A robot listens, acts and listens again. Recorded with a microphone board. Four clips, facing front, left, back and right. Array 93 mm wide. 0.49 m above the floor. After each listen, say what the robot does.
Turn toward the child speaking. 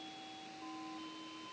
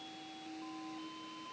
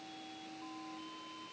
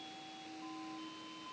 Keep listening.
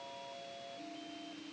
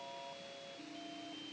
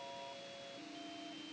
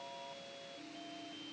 Keep listening.
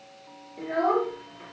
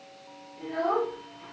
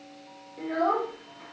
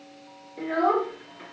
Turn 90° right.
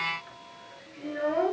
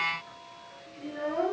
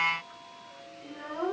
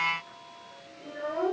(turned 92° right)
Facing the child speaking, over 4 m away.